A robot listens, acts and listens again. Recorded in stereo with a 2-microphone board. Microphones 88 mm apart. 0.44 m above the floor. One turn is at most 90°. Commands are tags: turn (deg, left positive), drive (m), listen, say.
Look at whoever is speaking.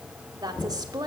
<turn deg="-45"/>
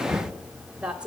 <turn deg="-15"/>
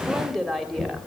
<say>Found it: a woman speaking, straight ahead.</say>